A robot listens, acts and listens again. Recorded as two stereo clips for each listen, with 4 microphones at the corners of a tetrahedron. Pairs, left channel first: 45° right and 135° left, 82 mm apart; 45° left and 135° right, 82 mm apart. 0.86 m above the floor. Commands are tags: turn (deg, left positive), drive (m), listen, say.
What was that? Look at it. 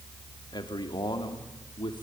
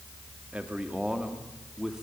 <turn deg="-55"/>
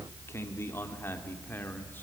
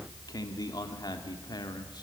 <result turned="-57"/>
<turn deg="20"/>
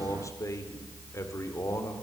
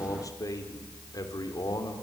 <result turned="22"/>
<turn deg="10"/>
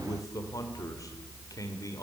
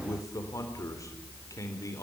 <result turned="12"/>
<say>Facing the man speaking.</say>